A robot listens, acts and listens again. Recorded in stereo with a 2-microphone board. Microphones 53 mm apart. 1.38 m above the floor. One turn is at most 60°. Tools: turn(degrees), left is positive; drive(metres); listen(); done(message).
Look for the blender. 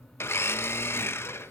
turn(degrees=50)
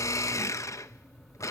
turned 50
turn(degrees=60)
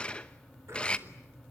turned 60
turn(degrees=20)
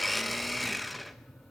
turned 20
done("Facing the blender.")